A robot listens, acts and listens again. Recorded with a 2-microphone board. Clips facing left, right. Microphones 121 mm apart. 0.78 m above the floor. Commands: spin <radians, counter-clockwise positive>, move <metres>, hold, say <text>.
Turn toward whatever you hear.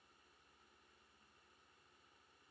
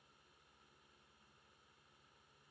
hold
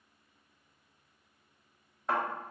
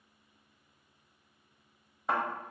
spin -0.52
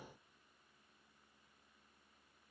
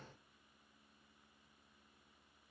hold
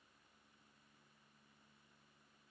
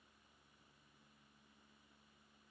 say I heard a thud, but can't make it out now. It was about 25° left or 145° right.